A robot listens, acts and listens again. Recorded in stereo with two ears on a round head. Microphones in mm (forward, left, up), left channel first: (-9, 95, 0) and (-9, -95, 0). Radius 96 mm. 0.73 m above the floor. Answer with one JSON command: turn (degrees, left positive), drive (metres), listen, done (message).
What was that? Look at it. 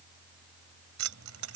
{"turn": -90}
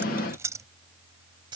{"turn": -25}
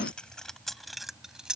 {"done": "Found it: keys jangling, straight ahead."}